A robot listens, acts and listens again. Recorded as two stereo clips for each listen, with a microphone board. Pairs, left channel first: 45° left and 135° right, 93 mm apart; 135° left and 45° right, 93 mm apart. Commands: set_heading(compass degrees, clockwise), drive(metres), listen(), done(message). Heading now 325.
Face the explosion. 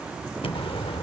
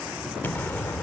set_heading(260)
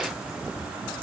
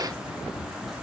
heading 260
done("Facing where the explosion came from. I can't hear it now.")